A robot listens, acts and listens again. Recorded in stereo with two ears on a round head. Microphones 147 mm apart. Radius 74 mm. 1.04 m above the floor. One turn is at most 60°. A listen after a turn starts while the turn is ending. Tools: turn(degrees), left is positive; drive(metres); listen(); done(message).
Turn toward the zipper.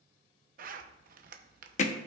turn(degrees=-50)
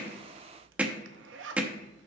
turn(degrees=-60)
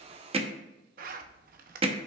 turn(degrees=-55)
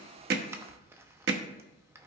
turn(degrees=-15)
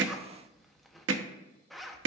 done("Found it: a zipper, straight ahead.")